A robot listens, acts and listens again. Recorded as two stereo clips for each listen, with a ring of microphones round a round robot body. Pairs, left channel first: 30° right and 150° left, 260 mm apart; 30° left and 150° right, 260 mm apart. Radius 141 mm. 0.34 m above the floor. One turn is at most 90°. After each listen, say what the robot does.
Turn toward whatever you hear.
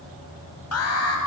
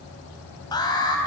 Turn 45° right.
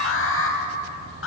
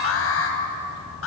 Facing the alarm.